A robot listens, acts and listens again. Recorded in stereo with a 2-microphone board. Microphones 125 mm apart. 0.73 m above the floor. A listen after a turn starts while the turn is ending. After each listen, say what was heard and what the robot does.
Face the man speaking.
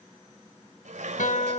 Keep listening.
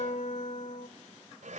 Keep listening.
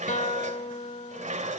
I can't make out a man speaking to turn to.